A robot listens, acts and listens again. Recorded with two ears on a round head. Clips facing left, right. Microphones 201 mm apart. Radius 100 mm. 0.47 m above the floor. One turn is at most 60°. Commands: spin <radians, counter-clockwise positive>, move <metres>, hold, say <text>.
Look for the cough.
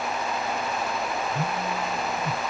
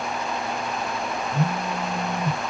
hold
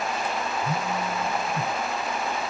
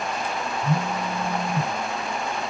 hold
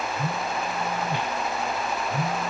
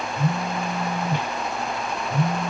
say I can't make out a cough, only a phone buzzing.